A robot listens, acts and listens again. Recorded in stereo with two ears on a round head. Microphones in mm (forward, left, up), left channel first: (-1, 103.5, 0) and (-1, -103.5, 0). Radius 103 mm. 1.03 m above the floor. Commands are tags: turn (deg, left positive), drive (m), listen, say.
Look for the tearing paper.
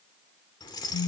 <listen/>
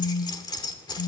<listen/>
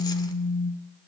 <say>I can't make out tearing paper, only keys jangling and a phone buzzing.</say>